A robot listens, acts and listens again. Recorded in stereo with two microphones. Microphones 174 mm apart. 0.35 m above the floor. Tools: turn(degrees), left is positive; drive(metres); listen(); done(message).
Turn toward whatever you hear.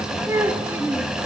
turn(degrees=-30)
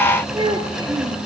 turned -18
turn(degrees=-25)
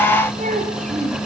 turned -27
turn(degrees=-130)
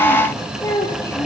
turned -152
turn(degrees=15)
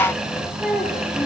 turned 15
done("Facing the child speaking, over 4 m away.")